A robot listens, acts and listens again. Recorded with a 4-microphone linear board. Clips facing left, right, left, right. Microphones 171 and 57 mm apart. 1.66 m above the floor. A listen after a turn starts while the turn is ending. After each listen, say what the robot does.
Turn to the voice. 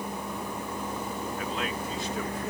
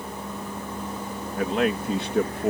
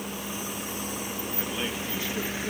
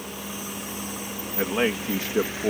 Turn 65° right.
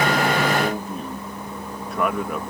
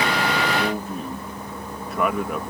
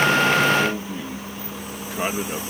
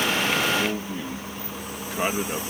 Facing the man speaking.